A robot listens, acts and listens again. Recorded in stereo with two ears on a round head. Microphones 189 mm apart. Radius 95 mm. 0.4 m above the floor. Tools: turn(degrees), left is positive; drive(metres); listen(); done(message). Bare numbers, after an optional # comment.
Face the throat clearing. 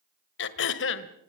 # The throat clearing: about 60° left or 120° left.
turn(60)
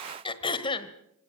# So it is at 30° left.
turn(30)
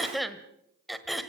done("Found it: throat clearing, straight ahead, 1 to 2 m away.")